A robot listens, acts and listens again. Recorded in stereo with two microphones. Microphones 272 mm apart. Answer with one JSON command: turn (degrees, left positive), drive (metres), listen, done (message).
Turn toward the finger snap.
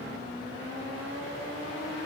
{"listen": true}
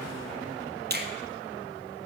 {"turn": -40}
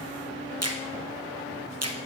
{"turn": -100}
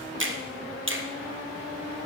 {"turn": -55}
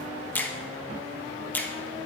{"done": "Found it: a finger snap, straight ahead, 1 to 2 m away."}